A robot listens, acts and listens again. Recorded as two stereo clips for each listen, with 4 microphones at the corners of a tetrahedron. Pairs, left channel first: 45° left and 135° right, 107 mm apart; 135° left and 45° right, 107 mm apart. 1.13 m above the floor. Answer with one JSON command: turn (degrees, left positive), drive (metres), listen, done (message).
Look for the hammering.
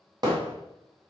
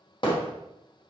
{"turn": 175}
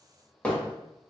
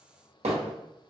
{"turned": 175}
{"turn": -35}
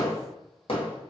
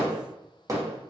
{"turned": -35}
{"turn": 15}
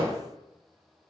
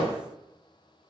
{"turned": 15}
{"done": "Facing the hammering, 1 to 2 m away."}